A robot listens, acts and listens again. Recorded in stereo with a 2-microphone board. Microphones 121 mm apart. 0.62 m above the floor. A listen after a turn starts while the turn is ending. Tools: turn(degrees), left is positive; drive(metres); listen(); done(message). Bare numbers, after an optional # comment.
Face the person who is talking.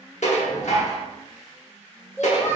# The child speaking: about 20° left or 160° left.
turn(20)
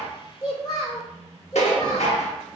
# So it is at 140° left.
turn(140)
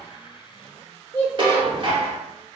# The child speaking is now 25° left.
turn(25)
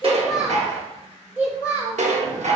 # The child speaking is now 15° right.
turn(-15)
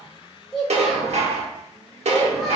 done("Found it: a child speaking, straight ahead.")